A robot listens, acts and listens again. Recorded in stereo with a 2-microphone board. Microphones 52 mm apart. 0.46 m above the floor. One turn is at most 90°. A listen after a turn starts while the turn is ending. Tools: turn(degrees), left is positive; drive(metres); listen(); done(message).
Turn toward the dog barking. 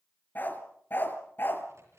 turn(degrees=45)
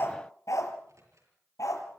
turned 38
turn(degrees=90)
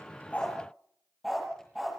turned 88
done("Facing the dog barking, over 4 m away.")